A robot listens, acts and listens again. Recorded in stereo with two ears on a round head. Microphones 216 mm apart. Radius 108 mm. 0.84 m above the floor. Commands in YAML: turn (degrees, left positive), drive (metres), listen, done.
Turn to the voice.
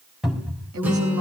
turn: -90
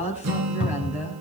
done: "Found it: a woman speaking, straight ahead, over 4 m away."